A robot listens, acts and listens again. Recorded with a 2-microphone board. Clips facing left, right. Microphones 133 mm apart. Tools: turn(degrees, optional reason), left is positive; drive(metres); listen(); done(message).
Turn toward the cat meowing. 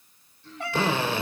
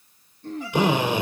turn(degrees=70, reason="The cat meowing: about 70° left or 110° left.")
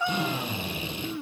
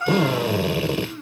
turn(degrees=15, reason="So it is at 15° left.")
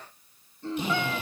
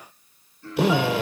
listen()
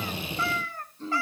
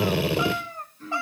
turn(degrees=-25, reason="The cat meowing is now 25° right.")
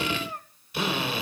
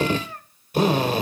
turn(degrees=20, reason="The cat meowing is now 20° left.")
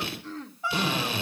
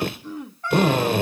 turn(degrees=10, reason="The cat meowing is now 10° left.")
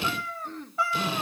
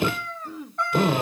done("Found it: a cat meowing, straight ahead, 2 to 4 m away.")